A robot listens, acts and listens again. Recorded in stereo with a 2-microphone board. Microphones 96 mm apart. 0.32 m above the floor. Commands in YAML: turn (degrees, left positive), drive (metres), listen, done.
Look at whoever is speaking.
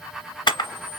listen: true
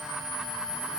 listen: true
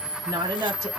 turn: -35
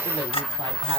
listen: true
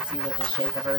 listen: true
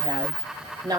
turn: -45
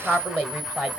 turn: -15
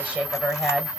turn: -10
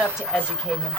done: "Found it: a woman speaking, straight ahead, 1 to 2 m away."